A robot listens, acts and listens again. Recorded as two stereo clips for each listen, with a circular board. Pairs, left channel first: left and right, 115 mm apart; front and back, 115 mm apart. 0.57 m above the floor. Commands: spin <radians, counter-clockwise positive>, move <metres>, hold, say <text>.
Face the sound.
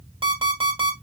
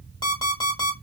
spin -0.87
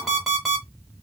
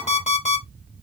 say Facing the alarm clock.